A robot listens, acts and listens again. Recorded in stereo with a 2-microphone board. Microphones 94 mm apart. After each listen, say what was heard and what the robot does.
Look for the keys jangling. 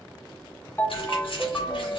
The keys jangling: about 70° left or 110° left. Turn 70° left.
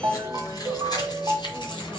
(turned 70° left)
So it is at 60° left. Turn 60° left.
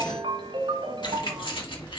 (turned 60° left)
The keys jangling is now 65° left. Turn 65° left.
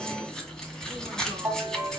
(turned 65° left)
Found it: keys jangling, straight ahead.